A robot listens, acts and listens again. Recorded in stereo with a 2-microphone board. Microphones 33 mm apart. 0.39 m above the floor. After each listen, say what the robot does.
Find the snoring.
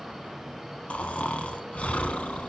Turn 45° left.
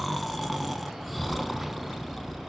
Found it: snoring, straight ahead.